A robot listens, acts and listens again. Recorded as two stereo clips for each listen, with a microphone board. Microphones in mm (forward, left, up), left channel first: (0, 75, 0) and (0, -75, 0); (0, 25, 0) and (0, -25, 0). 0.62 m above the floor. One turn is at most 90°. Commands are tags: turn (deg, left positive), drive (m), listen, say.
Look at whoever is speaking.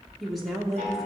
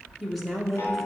<turn deg="30"/>
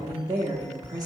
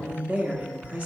<turn deg="-30"/>
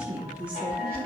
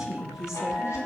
<turn deg="-10"/>
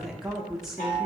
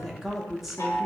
<say>Facing the woman speaking.</say>